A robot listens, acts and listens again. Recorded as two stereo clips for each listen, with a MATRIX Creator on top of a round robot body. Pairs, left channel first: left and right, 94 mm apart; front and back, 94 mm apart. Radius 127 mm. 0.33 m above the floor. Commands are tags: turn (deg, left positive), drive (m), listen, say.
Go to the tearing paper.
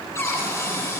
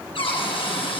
<listen/>
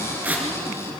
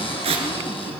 <turn deg="-165"/>
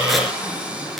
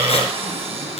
<listen/>
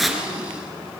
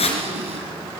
<drive m="1.0"/>
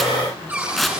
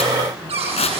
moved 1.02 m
<drive m="1.0"/>
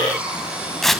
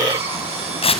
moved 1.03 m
<drive m="1.0"/>
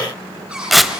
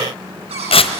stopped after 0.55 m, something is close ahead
<say>I am next to the tearing paper.</say>